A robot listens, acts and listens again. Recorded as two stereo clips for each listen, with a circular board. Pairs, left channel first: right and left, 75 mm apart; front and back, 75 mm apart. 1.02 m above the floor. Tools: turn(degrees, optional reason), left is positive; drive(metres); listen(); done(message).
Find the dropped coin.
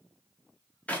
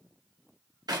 listen()
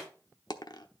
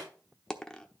turn(degrees=-80, reason="The dropped coin: 80° right.")
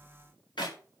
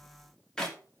done("I heard a dropped coin from this way, but can't make it out now.")